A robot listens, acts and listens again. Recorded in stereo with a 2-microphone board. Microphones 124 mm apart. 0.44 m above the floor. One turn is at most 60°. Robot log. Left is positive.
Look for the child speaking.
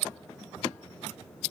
cmd idle
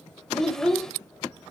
cmd yaw +30
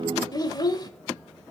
note: So it is at 145° left.
cmd yaw +60
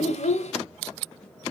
note: The child speaking is now 75° left.
cmd yaw +60
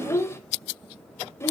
note: The child speaking is now 20° left.
cmd yaw +20
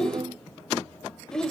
end: Facing the child speaking, under 1 m away.